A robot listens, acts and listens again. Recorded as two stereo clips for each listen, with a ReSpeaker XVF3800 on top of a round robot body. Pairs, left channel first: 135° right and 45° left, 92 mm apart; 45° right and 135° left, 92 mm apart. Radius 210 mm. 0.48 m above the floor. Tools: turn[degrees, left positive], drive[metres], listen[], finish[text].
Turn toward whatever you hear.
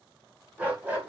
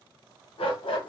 Thought: The dog barking: 25° right.
Action: turn[-25]
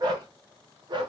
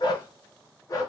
Action: finish[Facing the dog barking.]